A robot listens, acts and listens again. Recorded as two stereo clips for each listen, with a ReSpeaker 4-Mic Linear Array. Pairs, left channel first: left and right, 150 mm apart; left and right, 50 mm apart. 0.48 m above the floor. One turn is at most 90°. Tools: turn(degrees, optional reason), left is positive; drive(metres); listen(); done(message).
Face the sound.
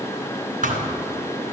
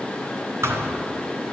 turn(degrees=-65, reason="The thud: about 65° right or 115° right.")
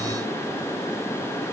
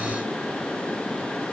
listen()
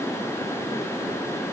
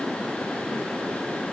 done("I heard a thud, but can't make it out now. It was about straight ahead or 50° right.")